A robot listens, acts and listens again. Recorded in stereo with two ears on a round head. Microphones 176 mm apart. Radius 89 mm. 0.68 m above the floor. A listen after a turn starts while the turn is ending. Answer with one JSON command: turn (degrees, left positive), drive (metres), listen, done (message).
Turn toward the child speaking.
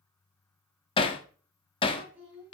{"turn": -30}
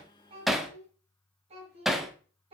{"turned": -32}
{"turn": -150}
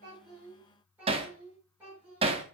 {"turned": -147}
{"turn": -10}
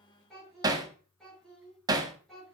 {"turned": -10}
{"done": "Found it: a child speaking, straight ahead, over 4 m away."}